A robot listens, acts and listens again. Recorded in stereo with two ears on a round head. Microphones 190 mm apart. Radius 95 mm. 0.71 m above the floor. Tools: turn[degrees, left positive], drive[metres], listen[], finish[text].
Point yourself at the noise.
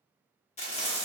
Thought: The frying: about 30° left or 150° left.
Action: turn[30]
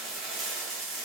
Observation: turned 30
Action: finish[Found it: frying, straight ahead, under 1 m away.]